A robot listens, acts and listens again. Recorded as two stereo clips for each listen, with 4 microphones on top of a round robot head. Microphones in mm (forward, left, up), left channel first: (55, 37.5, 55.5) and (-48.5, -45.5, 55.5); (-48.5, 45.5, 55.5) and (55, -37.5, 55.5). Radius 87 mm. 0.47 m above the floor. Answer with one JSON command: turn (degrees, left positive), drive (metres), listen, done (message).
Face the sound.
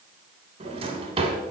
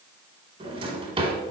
{"turn": -90}
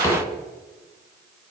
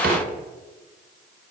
{"turn": -30}
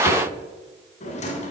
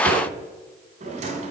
{"done": "Found it: a drawer, straight ahead."}